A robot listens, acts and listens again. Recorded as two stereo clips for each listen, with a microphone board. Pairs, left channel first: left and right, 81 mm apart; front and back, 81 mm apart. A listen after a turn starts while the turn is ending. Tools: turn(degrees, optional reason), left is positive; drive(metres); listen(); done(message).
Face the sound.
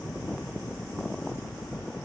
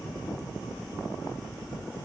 listen()
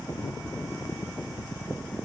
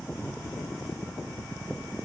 listen()
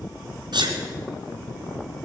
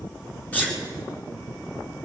turn(degrees=-70, reason="The sneeze: 70° right.")
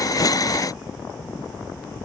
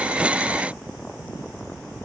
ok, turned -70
done("Facing where the sneeze came from. I can't hear it now.")